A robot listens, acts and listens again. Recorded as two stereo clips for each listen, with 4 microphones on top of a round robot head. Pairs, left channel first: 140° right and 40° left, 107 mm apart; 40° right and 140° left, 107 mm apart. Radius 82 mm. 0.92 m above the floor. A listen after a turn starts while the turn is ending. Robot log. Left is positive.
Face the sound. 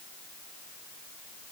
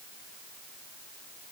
cmd idle
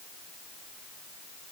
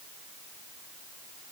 cmd idle
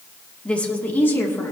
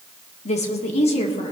note: The woman speaking: 75° right.
cmd yaw -75
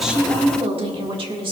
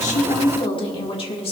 end: Facing the woman speaking.